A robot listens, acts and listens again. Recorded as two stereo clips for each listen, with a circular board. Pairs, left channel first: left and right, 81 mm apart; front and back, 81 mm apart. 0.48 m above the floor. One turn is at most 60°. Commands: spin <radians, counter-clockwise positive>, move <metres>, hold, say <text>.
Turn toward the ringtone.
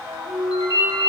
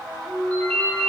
spin 1.05
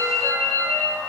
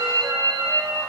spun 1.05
spin 0.44
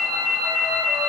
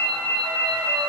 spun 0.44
spin 0.17
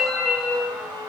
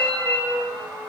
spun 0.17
say Facing the ringtone.